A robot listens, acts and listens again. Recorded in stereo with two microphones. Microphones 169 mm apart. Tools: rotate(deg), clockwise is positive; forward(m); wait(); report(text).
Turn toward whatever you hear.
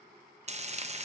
rotate(40)
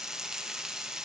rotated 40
report("Facing the frying, under 1 m away.")